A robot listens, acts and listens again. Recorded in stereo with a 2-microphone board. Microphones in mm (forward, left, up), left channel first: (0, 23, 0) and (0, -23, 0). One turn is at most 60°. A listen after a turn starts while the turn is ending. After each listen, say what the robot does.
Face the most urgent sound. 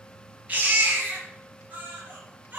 Turn 35° right.
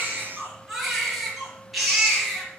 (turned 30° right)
Facing the baby crying, over 4 m away.